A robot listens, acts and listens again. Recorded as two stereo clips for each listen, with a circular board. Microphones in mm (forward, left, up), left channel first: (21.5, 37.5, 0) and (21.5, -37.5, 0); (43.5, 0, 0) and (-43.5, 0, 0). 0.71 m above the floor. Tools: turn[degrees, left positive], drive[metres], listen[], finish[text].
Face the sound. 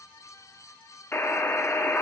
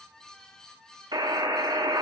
Thought: The buzzer: 145° left.
Action: turn[145]
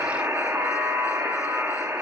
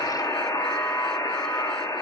Thought: The buzzer is now 40° right.
Action: turn[-40]
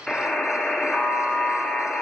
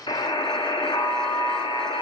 Action: finish[Facing the buzzer, under 1 m away.]